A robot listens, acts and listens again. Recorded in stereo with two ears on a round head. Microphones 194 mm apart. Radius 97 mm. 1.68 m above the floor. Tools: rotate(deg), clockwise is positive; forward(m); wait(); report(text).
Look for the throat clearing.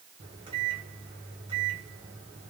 wait()
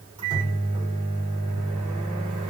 wait()
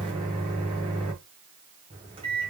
report("I can't make out throat clearing to turn to.")